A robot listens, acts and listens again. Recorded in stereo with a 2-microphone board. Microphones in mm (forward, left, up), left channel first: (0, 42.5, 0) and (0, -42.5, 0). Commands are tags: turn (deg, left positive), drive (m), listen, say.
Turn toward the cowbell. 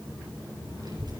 <listen/>
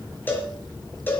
<turn deg="25"/>
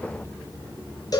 <turn deg="135"/>
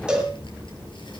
<turn deg="-10"/>
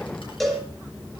<say>Found it: a cowbell, straight ahead.</say>